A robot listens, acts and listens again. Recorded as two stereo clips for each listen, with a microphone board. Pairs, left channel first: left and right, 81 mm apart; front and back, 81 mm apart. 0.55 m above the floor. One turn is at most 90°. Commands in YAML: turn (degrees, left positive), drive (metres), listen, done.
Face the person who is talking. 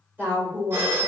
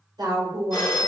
turn: -90
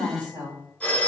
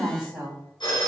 turn: -90
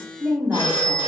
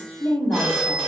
turn: -30
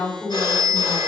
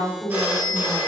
done: "Facing the woman speaking, 1 to 2 m away."